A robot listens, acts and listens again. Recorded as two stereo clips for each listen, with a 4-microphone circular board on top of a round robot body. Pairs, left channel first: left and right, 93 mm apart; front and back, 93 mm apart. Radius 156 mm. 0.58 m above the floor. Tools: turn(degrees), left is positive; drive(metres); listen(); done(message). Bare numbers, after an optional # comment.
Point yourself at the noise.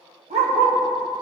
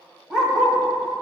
# The dog barking: 95° right.
turn(-95)
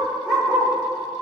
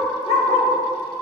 # The dog barking is now 10° right.
turn(-10)
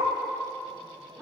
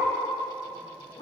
done("Found it: a dog barking, straight ahead.")